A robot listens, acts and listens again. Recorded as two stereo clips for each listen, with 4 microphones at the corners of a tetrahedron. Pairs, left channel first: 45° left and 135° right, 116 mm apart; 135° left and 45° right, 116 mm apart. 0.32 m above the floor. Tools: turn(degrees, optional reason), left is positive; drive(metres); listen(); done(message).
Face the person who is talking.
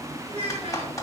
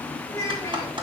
turn(degrees=-165, reason="The child speaking: 165° right.")
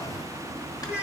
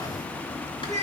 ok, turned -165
turn(degrees=-55, reason="The child speaking is now 55° right.")
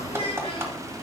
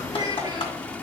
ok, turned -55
turn(degrees=10, reason="The child speaking is now 10° left.")
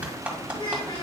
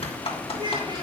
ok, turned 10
done("Found it: a child speaking, straight ahead, 2 to 4 m away.")